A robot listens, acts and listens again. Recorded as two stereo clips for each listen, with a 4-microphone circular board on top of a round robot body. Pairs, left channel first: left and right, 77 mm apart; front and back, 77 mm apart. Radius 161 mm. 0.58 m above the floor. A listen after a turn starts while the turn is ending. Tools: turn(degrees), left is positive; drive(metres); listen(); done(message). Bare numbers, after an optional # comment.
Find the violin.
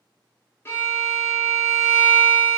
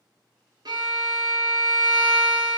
# The violin: 150° left.
turn(150)
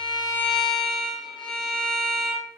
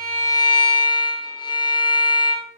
# The violin is now 10° left.
turn(10)
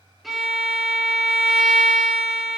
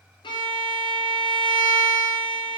done("Found it: a violin, straight ahead, under 1 m away.")